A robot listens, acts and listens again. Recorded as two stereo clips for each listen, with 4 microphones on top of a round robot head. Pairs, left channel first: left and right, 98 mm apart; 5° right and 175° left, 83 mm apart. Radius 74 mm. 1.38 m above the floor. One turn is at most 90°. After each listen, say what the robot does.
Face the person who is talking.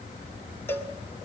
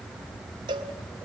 Keep listening.
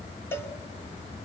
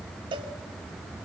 Keep listening.
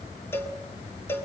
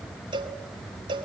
I can't make out anyone speaking, only a cowbell.